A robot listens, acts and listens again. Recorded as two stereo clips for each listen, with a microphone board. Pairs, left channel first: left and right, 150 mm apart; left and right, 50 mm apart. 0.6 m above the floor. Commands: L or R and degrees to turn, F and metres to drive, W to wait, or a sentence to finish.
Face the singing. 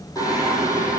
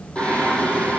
L20
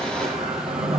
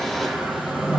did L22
Found it: singing, straight ahead.